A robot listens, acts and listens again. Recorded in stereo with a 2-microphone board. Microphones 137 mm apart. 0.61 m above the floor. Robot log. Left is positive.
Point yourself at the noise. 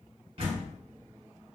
note: The door slam: about 45° right or 135° right.
cmd yaw -45
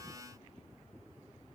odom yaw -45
cmd idle
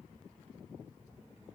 end: I heard a door slam, but can't make it out now. It was about straight ahead or 90° right.